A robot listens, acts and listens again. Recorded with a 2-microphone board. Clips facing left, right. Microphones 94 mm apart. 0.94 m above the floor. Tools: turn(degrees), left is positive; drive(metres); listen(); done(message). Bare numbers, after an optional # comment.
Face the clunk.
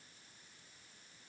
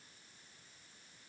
listen()
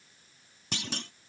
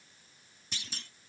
# The clunk: about 70° left or 110° left.
turn(70)
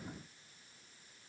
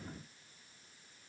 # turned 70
listen()
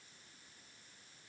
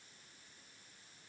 done("I heard a clunk, but can't make it out now. It was about straight ahead or 40° left.")